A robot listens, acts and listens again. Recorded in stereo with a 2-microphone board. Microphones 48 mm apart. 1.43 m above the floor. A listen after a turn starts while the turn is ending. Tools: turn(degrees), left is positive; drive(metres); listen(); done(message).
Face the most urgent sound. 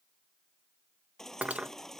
turn(degrees=30)
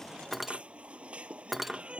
turn(degrees=-25)
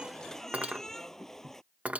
turn(degrees=10)
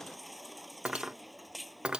done("Facing the baby crying.")